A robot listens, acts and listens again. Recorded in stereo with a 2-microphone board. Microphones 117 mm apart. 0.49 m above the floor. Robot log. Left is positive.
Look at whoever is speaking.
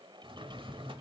cmd idle
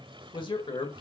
note: The man speaking: about 45° left or 135° left.
cmd yaw +45
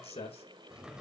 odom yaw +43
note: So it is at 85° left.
cmd yaw +85
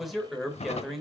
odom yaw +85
end: Found it: a man speaking, straight ahead.